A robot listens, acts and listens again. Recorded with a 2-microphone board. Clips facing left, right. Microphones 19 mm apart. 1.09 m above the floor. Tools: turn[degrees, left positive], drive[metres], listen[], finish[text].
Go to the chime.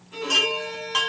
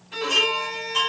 Thought: The chime: about 45° left or 135° left.
Action: turn[45]
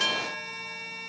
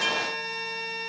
Thought: So it is at 90° left.
Action: turn[90]
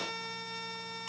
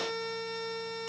Action: listen[]
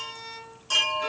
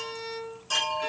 Thought: The chime is now 10° left.
Action: turn[10]
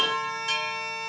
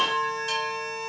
Action: drive[1.0]
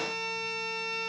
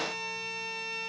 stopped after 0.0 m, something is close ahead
Action: listen[]
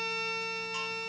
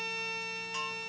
Action: listen[]
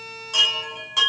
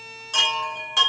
Thought: The chime is now 10° right.
Action: turn[-10]
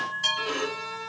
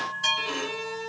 Action: finish[Blocked. The chime is further on, straight ahead.]